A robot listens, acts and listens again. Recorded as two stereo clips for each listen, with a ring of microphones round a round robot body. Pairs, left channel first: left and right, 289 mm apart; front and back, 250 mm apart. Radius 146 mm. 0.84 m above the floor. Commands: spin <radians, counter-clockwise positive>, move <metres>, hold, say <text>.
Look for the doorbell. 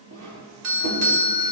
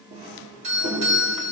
spin -2.01
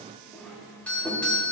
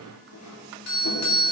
say Facing the doorbell, 2 to 4 m away.